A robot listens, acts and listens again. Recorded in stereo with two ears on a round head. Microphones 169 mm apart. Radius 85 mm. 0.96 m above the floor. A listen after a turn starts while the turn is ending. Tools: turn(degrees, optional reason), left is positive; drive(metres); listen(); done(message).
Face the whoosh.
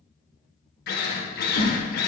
turn(degrees=65, reason="The whoosh: about 65° left or 115° left.")
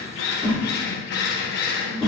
done("Found it: a whoosh, straight ahead, 2 to 4 m away.")